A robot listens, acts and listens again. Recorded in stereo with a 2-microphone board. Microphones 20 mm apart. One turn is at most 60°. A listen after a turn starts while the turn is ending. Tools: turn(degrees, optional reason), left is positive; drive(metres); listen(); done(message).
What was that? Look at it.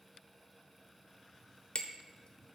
turn(degrees=55, reason="The hammering: about 55° left or 125° left.")
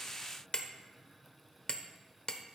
turn(degrees=60, reason="So it is at 60° left.")
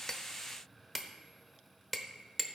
done("Facing the hammering.")